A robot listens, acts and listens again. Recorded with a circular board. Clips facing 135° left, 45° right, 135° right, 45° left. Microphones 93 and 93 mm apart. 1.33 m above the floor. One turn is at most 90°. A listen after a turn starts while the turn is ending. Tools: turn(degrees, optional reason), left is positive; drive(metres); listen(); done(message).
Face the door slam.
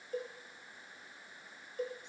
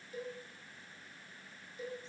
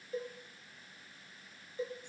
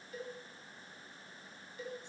listen()
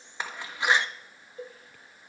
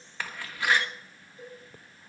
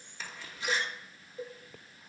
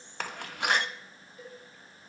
turn(degrees=65, reason="The door slam: 65° left.")
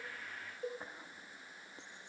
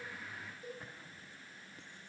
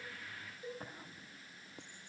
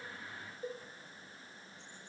done("Facing where the door slam came from. I can't hear it now.")